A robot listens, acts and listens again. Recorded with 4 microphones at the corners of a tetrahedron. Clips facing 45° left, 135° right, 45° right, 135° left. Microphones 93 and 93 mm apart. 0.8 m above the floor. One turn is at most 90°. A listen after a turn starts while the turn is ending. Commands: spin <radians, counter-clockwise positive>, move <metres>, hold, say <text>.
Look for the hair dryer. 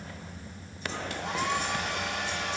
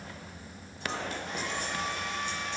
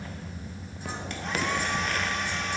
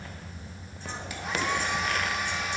spin 0.87
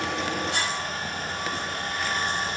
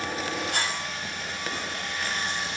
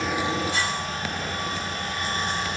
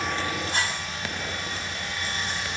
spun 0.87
say Found it: a hair dryer, straight ahead, 1 to 2 m away.